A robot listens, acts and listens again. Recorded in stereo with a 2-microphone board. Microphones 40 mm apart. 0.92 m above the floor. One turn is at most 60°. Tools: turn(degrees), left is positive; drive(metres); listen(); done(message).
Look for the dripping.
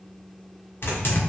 listen()
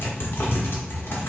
listen()
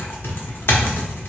done("I can't make out dripping, only typing on a keyboard.")